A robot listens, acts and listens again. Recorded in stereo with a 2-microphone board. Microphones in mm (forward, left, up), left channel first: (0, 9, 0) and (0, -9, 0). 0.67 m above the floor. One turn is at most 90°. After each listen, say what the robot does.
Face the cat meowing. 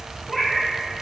Turn 30° left.
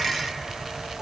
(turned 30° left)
Keep listening.
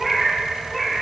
Turn 30° left.
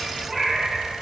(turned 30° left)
Turn 15° right.
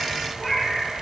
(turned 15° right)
Found it: a cat meowing, straight ahead, 2 to 4 m away.